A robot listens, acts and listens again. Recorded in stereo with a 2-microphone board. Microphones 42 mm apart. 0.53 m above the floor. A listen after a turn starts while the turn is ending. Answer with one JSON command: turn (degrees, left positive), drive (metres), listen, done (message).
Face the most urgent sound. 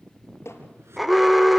{"turn": 30}
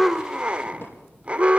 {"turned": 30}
{"turn": -35}
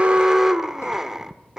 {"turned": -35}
{"turn": -10}
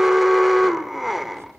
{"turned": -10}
{"done": "Facing the alarm."}